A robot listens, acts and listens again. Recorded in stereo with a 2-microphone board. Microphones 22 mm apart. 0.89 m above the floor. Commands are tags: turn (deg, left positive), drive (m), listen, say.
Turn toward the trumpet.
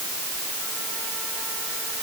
<listen/>
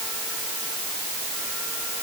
<listen/>
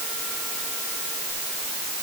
<say>I can't make out a trumpet to turn to.</say>